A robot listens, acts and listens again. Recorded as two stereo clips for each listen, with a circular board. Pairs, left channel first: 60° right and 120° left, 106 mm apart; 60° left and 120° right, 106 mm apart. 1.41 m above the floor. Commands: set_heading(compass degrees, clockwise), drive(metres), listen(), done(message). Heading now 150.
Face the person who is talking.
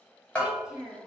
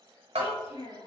set_heading(110)
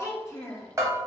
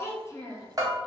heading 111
done("Found it: a child speaking, straight ahead, under 1 m away.")